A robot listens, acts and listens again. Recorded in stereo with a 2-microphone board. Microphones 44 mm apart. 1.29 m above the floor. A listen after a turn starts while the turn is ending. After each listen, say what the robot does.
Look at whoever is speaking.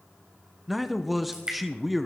Turn 30° left.
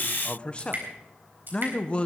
Turn 150° left.
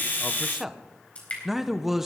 Turn 10° right.
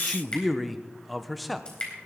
Found it: a man speaking, straight ahead.